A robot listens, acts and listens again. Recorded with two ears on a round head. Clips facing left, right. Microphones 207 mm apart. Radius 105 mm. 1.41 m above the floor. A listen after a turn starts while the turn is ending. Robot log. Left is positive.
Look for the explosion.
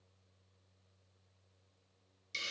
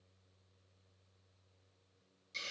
cmd idle
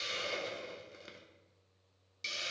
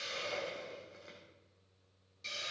cmd idle
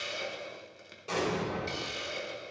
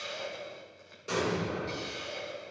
cmd yaw -30
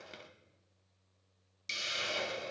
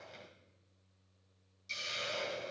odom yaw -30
cmd idle
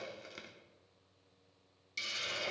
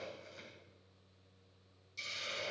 end: I heard an explosion, but can't make it out now. It was about 15° left or 135° right.